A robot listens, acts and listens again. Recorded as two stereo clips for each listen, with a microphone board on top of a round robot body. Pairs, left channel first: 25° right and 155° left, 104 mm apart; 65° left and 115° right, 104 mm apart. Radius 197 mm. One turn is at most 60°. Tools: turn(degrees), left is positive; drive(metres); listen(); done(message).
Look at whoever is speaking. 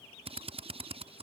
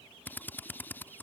listen()
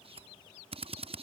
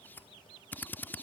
listen()
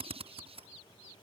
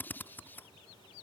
done("I can't make out anyone speaking to turn to.")